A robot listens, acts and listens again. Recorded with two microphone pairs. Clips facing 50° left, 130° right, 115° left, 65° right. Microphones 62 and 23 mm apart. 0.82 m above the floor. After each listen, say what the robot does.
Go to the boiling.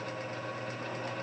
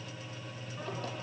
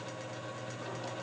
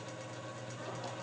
Keep listening.
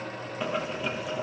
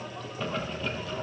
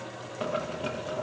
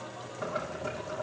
Turn 125° left.
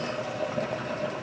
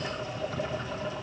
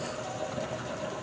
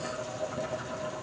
Turn 35° left.
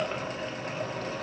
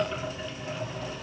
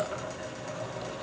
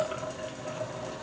Drive 1.0 m forward.
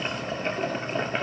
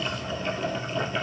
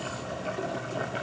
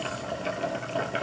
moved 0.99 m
Drive 1.0 m forward.
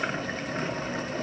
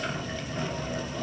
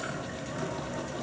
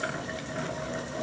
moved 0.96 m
Drive 1.0 m forward.
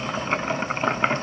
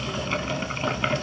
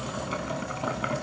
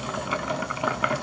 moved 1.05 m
Drive 1.0 m forward.
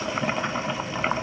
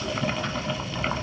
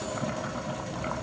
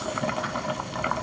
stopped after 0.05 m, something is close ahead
Turn 15° right.
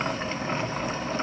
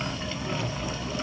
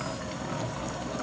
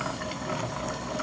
Arrived at the boiling, straight ahead.